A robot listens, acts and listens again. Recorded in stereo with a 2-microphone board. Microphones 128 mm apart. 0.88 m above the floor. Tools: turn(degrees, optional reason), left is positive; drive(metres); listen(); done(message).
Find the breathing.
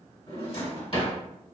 listen()
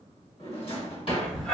turn(degrees=30)
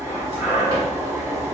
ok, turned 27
turn(degrees=-20, reason="So it is at 20° right.")
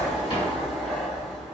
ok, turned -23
done("Facing the breathing, 1 to 2 m away.")